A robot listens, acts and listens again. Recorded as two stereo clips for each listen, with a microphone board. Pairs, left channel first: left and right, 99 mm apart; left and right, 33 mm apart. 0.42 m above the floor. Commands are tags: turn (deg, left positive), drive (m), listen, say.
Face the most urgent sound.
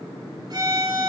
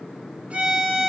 <listen/>
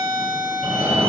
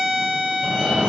<turn deg="-25"/>
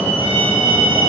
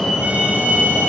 <say>Found it: a fire alarm, straight ahead, 2 to 4 m away.</say>